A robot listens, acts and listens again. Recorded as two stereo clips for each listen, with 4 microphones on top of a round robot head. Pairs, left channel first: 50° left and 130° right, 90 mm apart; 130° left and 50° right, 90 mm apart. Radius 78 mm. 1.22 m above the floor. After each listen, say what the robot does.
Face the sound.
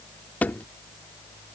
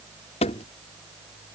Turn 125° left.
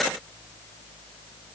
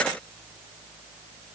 Facing where the thud came from. I can't hear it now.